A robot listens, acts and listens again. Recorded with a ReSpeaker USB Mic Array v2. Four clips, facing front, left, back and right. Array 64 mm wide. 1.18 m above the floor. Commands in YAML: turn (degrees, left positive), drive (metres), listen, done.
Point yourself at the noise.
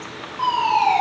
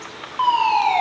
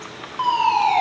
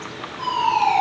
turn: 110
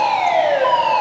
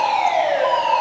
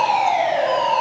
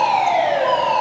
turn: 15
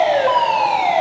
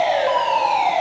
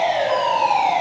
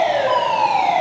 done: "Found it: a fire alarm, straight ahead, over 4 m away."